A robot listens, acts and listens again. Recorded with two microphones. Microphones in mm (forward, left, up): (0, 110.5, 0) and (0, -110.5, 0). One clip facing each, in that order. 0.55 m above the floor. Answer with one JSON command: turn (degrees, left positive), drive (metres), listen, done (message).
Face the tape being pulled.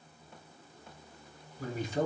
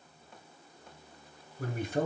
{"listen": true}
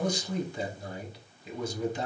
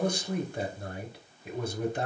{"listen": true}
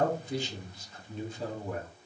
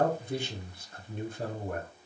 {"done": "I can't make out tape being pulled to turn to."}